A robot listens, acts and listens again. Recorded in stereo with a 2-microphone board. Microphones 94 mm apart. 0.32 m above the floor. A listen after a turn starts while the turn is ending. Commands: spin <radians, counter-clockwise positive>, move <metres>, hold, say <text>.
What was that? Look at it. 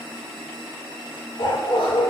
spin 1.05
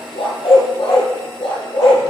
spin 1.31
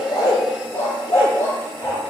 spin 0.44
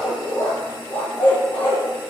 spin 0.35
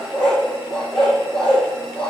say Found it: a dog barking, straight ahead, 2 to 4 m away.